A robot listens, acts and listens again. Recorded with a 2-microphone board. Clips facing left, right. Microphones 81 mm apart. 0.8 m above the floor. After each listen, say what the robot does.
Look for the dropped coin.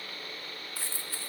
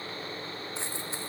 Turn 20° right.
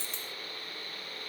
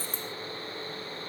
Turn 140° right.
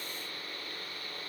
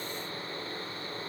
Facing where the dropped coin came from. I can't hear it now.